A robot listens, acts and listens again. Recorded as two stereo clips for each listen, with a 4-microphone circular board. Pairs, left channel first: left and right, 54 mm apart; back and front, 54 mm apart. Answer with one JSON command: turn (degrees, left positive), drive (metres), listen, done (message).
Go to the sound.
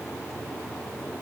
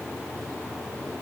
{"listen": true}
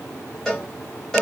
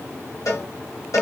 {"turn": 170}
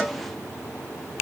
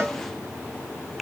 {"drive": 1.0}
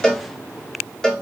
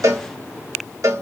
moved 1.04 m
{"turn": 10}
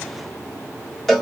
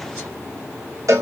{"drive": 1.0}
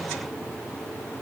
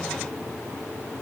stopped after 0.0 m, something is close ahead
{"listen": true}
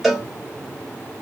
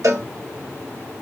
{"done": "Arrived at the cowbell, straight ahead."}